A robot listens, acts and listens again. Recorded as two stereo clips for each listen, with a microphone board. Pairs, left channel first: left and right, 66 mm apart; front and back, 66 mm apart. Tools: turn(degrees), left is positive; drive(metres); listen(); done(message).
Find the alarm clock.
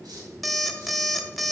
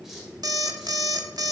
turn(degrees=180)
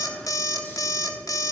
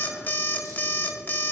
turn(degrees=60)
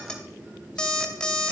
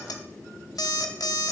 turn(degrees=15)
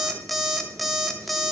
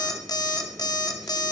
done("Facing the alarm clock.")